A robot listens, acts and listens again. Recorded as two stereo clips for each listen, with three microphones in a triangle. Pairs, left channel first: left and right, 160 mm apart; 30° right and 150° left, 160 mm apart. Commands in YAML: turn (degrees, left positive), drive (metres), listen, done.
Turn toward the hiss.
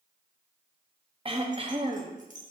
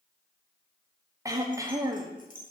listen: true
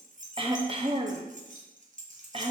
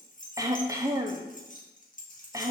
listen: true
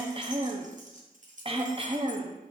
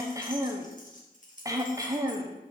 done: "I can't make out a hiss, only keys jangling and throat clearing."